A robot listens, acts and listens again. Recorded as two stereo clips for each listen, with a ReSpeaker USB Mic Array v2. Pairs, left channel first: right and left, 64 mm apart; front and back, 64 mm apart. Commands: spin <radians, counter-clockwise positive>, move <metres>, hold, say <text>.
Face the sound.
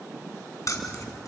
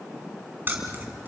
spin -2.09
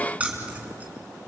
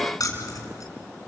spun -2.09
spin 0.44
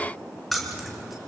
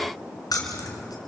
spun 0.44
say Facing the keys jangling, over 4 m away.